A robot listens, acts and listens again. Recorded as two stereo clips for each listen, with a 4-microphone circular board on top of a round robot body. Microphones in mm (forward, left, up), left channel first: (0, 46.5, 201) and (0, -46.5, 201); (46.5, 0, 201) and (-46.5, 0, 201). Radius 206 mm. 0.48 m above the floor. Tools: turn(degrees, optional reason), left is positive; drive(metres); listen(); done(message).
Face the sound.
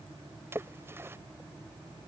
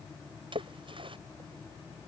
turn(degrees=-155, reason="The splash: 155° right.")
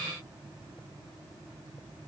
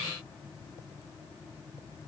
done("I heard a splash from this way, but can't make it out now.")